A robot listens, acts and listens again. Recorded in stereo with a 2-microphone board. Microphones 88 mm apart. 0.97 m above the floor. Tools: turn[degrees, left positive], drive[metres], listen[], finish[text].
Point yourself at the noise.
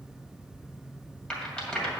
Action: turn[30]
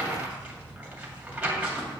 Thought: So it is at 15° right.
Action: turn[-15]
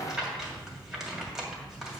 Action: finish[Facing the rattle.]